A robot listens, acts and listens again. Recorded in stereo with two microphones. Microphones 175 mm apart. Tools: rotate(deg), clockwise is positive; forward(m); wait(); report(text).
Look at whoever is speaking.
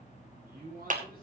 rotate(55)
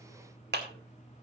wait()
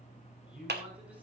report("Facing the man speaking.")